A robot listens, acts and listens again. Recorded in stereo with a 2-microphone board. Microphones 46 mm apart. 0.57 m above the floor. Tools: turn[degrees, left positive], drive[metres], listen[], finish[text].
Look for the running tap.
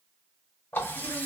Thought: The running tap: about 60° left or 120° left.
Action: turn[60]
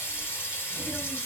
Thought: So it is at 60° left.
Action: turn[60]
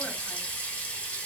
Thought: The running tap is now 25° left.
Action: turn[25]
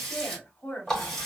Action: finish[Facing the running tap, 1 to 2 m away.]